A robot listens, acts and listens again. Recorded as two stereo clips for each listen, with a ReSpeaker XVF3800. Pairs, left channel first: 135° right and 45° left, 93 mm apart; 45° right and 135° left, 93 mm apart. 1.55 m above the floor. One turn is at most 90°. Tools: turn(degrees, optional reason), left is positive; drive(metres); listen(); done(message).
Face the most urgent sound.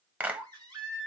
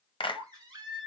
turn(degrees=90, reason="The baby crying: 90° left.")
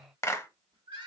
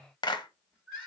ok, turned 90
turn(degrees=40, reason="The baby crying is now 40° left.")
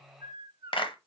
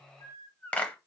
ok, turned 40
done("Facing the baby crying.")